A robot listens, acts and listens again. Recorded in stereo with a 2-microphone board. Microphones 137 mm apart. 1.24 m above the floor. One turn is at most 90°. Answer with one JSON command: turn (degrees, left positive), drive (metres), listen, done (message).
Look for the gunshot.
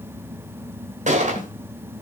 {"turn": -65}
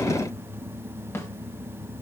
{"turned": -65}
{"listen": true}
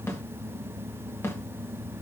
{"done": "I heard a gunshot, but can't make it out now. It was about straight ahead or 50° right."}